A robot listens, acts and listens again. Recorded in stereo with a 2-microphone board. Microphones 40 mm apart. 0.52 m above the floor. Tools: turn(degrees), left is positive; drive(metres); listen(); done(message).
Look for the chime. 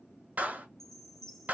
turn(degrees=30)
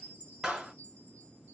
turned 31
turn(degrees=140)
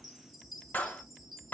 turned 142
done("Facing the chime, 1 to 2 m away.")